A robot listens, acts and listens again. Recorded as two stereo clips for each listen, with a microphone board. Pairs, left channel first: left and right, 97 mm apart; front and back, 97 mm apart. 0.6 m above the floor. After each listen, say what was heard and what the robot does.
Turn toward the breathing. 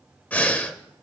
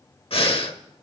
The breathing: 15° left. Turn 15° left.
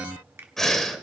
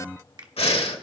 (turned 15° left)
Facing the breathing, 1 to 2 m away.